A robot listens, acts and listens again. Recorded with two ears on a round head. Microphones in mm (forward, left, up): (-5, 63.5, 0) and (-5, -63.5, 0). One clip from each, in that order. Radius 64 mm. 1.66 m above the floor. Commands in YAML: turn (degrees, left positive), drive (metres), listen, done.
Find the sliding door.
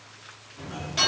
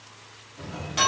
turn: 20
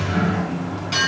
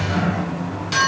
done: "Found it: a sliding door, straight ahead."